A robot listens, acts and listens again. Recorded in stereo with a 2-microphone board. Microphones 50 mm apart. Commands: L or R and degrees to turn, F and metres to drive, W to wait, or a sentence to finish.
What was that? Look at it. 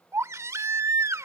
R75
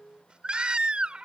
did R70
R20
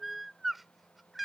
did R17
Facing the baby crying.